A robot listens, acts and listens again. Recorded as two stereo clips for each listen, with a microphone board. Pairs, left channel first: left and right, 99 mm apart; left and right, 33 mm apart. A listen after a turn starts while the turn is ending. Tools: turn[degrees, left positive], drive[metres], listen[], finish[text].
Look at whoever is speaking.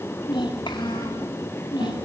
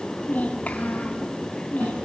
Thought: The child speaking: about 55° left or 125° left.
Action: turn[55]
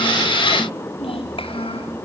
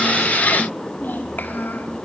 Thought: So it is at 70° left.
Action: turn[70]
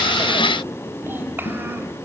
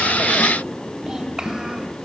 Thought: The child speaking is now 20° right.
Action: turn[-20]
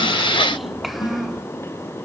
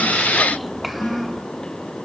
Action: finish[Found it: a child speaking, straight ahead, 2 to 4 m away.]